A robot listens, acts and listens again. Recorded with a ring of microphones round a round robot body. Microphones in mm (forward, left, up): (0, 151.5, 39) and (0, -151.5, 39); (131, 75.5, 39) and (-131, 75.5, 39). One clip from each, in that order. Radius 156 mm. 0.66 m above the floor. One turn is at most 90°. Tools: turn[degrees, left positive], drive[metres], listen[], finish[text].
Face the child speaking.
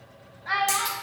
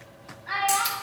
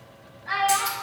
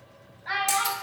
Thought: The child speaking: 135° left.
Action: turn[90]
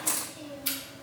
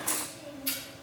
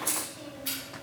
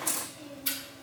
Thought: The child speaking is now 80° left.
Action: turn[80]
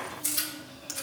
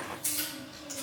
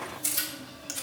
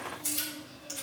Action: listen[]
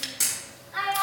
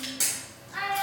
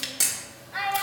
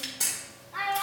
Action: finish[Found it: a child speaking, straight ahead, 2 to 4 m away.]